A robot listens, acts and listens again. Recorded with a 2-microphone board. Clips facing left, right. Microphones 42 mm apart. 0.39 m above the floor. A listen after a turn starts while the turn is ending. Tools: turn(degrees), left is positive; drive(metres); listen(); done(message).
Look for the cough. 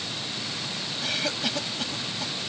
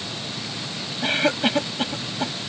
turn(degrees=-40)
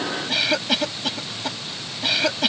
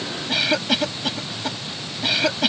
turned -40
done("Found it: a cough, straight ahead.")